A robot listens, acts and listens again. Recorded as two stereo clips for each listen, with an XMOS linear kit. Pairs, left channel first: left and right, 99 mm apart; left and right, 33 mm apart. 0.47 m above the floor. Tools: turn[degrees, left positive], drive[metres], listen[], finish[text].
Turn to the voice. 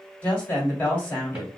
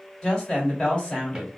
Thought: The woman speaking: about 20° left or 160° left.
Action: turn[20]
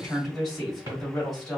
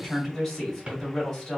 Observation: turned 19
Action: finish[Found it: a woman speaking, straight ahead, 2 to 4 m away.]